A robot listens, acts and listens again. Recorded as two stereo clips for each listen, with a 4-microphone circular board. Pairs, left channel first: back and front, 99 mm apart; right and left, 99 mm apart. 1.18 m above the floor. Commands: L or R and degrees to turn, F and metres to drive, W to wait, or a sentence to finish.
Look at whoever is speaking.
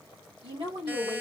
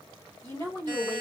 R30
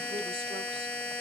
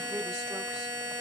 W
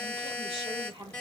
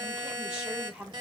L15
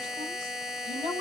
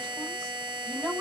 R10
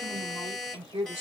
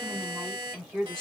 Found it: a woman speaking, straight ahead, 2 to 4 m away.